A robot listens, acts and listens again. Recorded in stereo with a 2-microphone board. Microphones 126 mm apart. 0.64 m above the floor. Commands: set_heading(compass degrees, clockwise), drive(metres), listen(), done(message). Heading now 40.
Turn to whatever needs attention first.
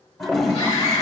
set_heading(0)
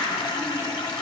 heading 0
listen()
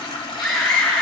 done("Found it: a scream, straight ahead, 1 to 2 m away.")